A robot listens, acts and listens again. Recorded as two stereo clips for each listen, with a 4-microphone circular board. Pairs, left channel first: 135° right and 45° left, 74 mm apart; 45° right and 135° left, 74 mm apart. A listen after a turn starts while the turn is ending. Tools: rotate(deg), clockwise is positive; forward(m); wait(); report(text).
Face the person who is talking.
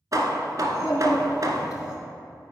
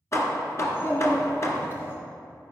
rotate(100)
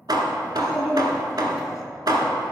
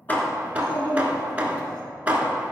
rotate(40)
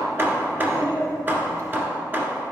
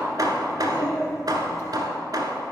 report("Found it: a child speaking, straight ahead.")